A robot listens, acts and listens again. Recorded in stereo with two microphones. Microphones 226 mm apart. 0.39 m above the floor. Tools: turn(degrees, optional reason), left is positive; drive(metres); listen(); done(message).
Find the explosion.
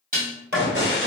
turn(degrees=-70, reason="The explosion: about 70° right or 110° right.")
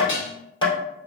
listen()
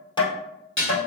done("I heard an explosion, but can't make it out now. It was about straight ahead or 40° right.")